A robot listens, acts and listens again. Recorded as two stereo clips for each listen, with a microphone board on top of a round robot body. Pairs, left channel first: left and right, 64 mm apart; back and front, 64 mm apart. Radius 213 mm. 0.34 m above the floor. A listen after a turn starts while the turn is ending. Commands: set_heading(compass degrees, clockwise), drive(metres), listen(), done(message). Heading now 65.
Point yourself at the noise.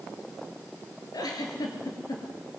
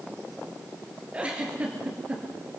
set_heading(355)
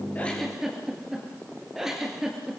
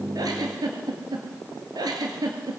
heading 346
done("Found it: a giggle, straight ahead, 2 to 4 m away.")